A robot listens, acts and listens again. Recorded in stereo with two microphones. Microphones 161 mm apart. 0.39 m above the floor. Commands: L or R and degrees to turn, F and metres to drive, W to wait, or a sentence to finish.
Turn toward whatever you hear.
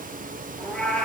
L30
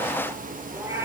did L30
R15
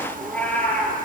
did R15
L10
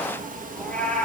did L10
L10
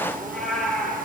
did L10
Facing the cat meowing.